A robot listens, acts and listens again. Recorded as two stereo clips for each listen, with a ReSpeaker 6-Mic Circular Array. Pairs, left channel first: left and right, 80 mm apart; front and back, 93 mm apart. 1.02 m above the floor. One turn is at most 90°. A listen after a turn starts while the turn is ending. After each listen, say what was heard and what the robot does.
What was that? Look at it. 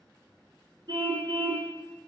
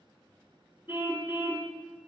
The car horn: 120° right. Turn 90° right.
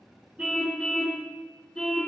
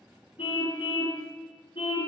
Found it: a car horn, straight ahead, 2 to 4 m away.